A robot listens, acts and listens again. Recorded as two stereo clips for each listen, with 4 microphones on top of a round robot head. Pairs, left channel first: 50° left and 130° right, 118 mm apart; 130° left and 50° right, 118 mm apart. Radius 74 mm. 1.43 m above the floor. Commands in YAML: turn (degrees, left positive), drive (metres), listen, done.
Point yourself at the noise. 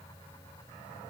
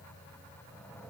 listen: true
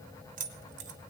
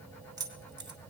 turn: -105
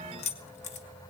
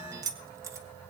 turn: 15
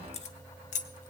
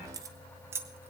turn: 20
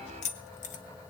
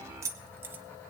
turn: 25
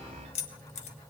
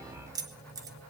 turn: 15
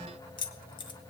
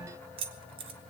done: "Facing the keys jangling."